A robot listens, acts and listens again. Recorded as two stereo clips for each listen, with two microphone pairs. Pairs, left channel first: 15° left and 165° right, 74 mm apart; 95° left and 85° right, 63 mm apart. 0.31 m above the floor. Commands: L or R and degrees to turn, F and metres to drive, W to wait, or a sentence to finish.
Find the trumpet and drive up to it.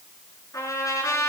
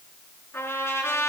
L50
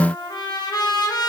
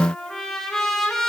L10
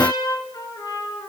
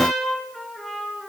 F1.0
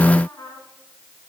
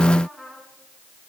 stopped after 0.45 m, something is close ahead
Blocked. The trumpet is further on, straight ahead.